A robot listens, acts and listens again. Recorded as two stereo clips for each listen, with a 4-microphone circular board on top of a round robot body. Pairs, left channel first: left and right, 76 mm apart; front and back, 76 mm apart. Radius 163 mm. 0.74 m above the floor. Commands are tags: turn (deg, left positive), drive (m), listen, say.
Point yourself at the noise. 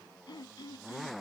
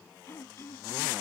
<turn deg="60"/>
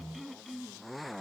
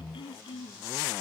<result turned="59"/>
<say>Facing the throat clearing.</say>